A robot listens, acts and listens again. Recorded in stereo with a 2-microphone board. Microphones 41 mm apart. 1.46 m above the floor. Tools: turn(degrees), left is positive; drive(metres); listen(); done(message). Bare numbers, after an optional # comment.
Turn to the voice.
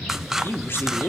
# The man speaking: about 70° left or 110° left.
turn(70)
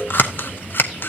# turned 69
listen()
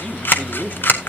# So it is at 40° left.
turn(40)
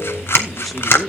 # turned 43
done("Facing the man speaking.")